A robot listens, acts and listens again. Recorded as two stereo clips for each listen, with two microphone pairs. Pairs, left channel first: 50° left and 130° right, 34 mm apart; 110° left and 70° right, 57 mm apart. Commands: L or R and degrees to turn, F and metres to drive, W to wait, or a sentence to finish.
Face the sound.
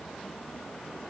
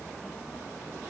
W
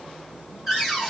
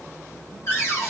L140
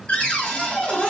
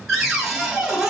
L15
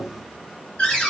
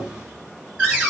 Found it: a cupboard door, straight ahead, 1 to 2 m away.